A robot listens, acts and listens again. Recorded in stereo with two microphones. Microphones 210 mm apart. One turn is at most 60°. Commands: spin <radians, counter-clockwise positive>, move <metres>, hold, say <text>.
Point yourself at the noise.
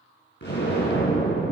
spin 1.05
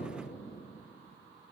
hold
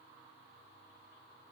say I heard an explosion, but can't make it out now. It was about straight ahead or 60° left.